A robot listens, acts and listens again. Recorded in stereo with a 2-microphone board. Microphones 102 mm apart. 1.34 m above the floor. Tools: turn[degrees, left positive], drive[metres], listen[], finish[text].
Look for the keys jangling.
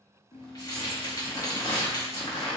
Thought: The keys jangling: about 40° left or 140° left.
Action: turn[40]
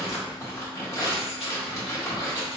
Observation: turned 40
Action: listen[]
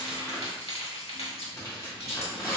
Thought: So it is at 95° left.
Action: turn[95]
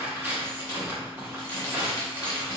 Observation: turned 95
Action: listen[]
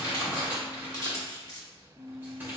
Thought: The keys jangling is now 40° left.
Action: turn[40]
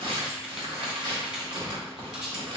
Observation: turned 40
Thought: The keys jangling is now 10° right.
Action: turn[-10]
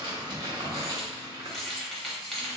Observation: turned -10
Action: finish[Facing the keys jangling, 1 to 2 m away.]